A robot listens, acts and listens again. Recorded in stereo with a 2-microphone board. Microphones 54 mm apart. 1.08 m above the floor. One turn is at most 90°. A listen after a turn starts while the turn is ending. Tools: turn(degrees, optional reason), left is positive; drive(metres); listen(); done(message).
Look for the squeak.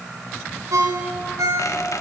turn(degrees=90)
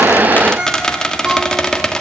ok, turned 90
turn(degrees=10, reason="So it is at 10° left.")
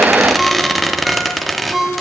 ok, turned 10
done("Found it: a squeak, straight ahead, 1 to 2 m away.")